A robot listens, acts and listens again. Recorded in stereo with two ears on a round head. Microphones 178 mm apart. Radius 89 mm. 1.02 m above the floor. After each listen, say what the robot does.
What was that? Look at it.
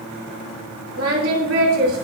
Turn 90° right.
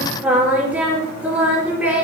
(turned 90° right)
Turn 10° right.
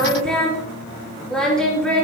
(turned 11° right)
Facing the singing, over 4 m away.